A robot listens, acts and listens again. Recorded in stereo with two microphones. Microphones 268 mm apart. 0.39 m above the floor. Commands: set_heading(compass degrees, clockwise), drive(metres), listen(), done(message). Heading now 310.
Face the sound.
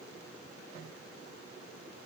listen()
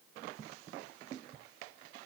listen()
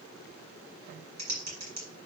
set_heading(25)
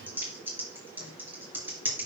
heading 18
done("Facing the typing on a keyboard, 2 to 4 m away.")